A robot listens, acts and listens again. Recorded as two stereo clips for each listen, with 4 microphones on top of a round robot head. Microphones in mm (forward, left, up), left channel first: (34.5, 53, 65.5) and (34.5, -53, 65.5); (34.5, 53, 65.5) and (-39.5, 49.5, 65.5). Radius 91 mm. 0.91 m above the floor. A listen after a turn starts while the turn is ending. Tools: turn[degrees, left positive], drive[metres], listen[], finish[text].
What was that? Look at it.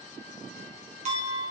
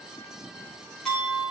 Thought: The clink: 80° right.
Action: turn[-80]
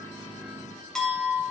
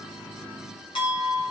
Action: finish[Found it: a clink, straight ahead.]